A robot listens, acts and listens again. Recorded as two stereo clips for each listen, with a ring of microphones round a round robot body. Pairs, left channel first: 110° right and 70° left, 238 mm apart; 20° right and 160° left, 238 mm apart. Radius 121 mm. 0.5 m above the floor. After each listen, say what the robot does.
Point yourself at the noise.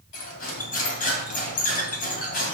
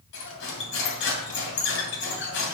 Turn 60° right.
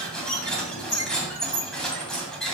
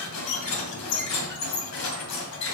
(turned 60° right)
Turn 25° right.
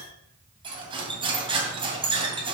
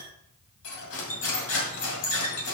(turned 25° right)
Found it: cutlery clinking, straight ahead.